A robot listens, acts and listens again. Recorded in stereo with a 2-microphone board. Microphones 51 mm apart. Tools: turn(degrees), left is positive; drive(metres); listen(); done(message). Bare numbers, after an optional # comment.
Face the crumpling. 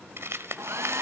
# The crumpling: about 60° right or 120° right.
turn(-60)
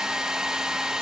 listen()
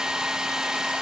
listen()
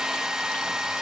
done("I heard crumpling, but can't make it out now. It was about straight ahead or 60° right.")